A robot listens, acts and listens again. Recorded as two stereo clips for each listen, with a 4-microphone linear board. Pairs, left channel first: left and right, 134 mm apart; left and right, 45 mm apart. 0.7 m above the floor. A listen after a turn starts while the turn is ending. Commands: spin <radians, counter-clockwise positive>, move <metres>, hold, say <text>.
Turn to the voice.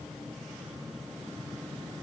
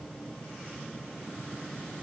hold
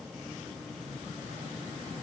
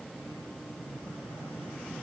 hold
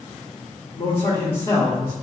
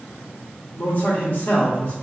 spin 0.70
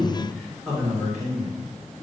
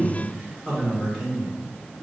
say Facing the man speaking.